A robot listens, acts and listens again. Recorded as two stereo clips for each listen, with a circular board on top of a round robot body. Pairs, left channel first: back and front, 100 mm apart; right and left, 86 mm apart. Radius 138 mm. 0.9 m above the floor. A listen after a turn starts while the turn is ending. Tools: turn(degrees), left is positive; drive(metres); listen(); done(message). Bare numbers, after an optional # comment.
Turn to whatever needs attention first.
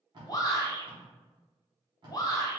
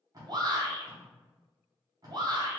# The shout: 125° left.
turn(125)
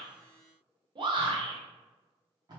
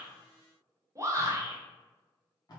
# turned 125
# The shout is now 35° left.
turn(35)
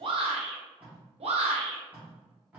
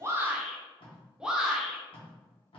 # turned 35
# The shout is now 10° left.
turn(10)
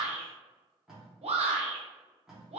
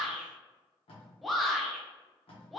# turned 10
done("Facing the shout.")